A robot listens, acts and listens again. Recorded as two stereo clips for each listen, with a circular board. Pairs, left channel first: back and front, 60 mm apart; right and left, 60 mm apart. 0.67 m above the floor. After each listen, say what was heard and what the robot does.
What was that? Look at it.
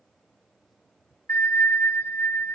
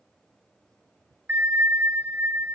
The bell: 130° left. Turn 130° left.
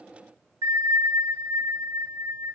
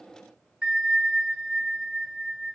The bell is now 10° left. Turn 10° left.
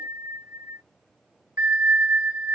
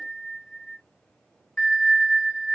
Facing the bell, 1 to 2 m away.